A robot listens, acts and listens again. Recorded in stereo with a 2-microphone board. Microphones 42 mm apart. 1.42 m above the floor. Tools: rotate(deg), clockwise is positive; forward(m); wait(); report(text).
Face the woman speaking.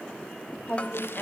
rotate(-45)
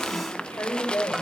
rotate(-90)
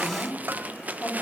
rotate(-30)
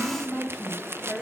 report("Found it: a woman speaking, straight ahead, over 4 m away.")